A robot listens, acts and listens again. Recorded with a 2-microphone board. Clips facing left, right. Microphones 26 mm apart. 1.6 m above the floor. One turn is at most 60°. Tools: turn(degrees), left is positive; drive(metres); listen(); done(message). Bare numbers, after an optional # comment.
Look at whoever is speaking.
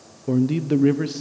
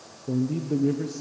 turn(60)
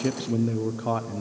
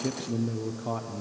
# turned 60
# So it is at 25° left.
turn(25)
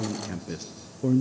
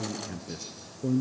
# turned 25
# The man speaking is now 15° left.
turn(15)
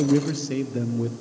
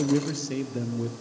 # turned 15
done("Facing the man speaking.")